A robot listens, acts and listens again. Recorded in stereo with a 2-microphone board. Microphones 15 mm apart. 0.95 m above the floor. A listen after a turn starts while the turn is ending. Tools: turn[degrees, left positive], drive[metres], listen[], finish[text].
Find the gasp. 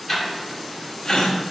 Thought: The gasp: about 55° left or 125° left.
Action: turn[55]
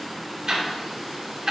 Action: listen[]
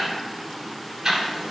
Action: finish[I heard a gasp, but can't make it out now. It was about straight ahead or 70° left.]